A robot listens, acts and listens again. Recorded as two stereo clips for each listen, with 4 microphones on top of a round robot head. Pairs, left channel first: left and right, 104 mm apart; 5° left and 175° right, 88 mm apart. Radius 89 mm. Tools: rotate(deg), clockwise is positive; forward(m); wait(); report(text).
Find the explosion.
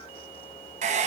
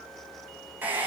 wait()
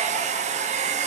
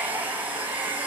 wait()
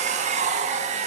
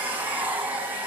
report("I can't make out an explosion, only a hair dryer.")